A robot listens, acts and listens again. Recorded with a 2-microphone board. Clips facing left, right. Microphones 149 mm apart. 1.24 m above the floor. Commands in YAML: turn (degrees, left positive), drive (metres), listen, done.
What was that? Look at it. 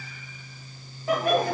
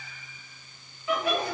turn: 55
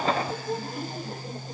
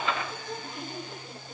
turn: 60
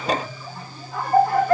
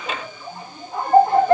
turn: -25
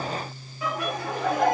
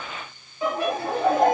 turn: -30
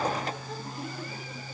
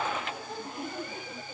listen: true
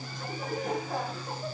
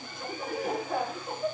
done: "Facing the laughter, 2 to 4 m away."